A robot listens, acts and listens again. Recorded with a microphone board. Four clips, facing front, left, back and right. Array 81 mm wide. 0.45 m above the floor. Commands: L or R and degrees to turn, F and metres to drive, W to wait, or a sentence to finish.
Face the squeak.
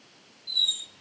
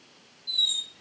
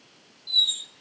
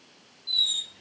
R115
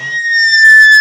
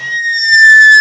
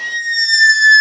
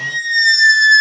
L20
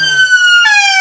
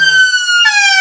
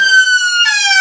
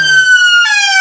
Found it: a squeak, straight ahead, 1 to 2 m away.